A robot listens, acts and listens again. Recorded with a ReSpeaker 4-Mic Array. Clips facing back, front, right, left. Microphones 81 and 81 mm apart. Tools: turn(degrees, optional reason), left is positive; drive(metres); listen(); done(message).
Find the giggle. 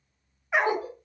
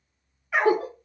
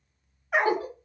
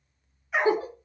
turn(degrees=25, reason="The giggle: 25° left.")
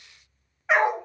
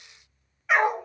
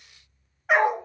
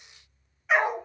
listen()
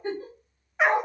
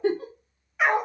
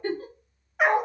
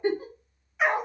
turn(degrees=20, reason="The giggle is now 20° left.")
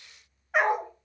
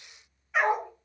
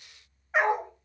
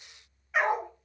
listen()
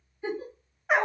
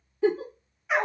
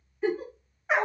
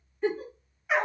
done("Found it: a giggle, straight ahead.")